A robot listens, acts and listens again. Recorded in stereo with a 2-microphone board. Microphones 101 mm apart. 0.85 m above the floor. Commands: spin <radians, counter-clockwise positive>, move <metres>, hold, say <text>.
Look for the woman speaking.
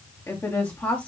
spin 0.26
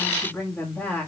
spin 0.52
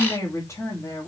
spin 0.35
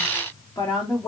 spin 0.44
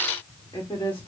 spin 2.44
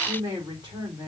spin -0.52
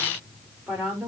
say Facing the woman speaking, 2 to 4 m away.